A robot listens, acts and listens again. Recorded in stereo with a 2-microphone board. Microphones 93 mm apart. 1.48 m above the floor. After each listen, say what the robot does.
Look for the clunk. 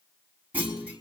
Turn 20° right.
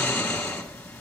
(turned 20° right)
Keep listening.
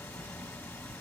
I heard a clunk, but can't make it out now. It was about straight ahead or 140° right.